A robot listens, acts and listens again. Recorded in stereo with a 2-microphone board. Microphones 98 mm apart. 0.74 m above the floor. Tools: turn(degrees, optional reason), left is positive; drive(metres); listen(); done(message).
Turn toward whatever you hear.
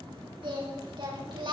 turn(degrees=-60, reason="The singing: about 60° right or 120° right.")
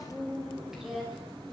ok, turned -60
done("Found it: singing, straight ahead, over 4 m away.")